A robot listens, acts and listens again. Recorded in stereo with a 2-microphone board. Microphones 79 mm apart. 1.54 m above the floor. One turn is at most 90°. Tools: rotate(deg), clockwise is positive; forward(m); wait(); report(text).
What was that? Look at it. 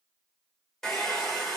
rotate(-30)
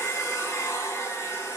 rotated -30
rotate(-90)
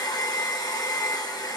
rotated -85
rotate(-55)
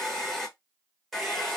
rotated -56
report("Found it: a hair dryer, straight ahead, 1 to 2 m away.")